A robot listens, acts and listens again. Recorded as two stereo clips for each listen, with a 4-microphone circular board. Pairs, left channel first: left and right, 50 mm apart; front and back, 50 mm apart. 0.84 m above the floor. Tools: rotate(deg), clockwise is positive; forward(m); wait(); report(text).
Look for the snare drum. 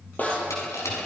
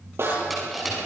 rotate(-150)
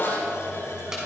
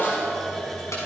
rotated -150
rotate(-45)
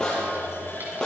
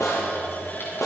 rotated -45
rotate(-15)
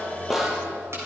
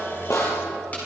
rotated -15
report("Found it: a snare drum, straight ahead.")